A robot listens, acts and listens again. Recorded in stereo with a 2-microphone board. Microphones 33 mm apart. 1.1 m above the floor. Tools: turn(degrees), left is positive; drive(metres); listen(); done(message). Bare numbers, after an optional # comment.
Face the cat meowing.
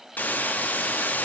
listen()
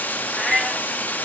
turn(30)
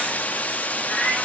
# So it is at 135° left.
turn(135)
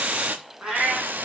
# The cat meowing is now 20° right.
turn(-20)
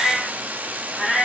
# The cat meowing is now 10° right.
turn(-10)
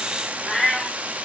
done("Facing the cat meowing.")